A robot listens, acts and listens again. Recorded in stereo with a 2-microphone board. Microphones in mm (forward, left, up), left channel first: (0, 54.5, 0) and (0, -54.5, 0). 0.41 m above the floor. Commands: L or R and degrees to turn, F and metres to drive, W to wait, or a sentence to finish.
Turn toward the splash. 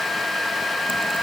W
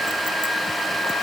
W
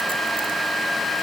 I can't make out a splash.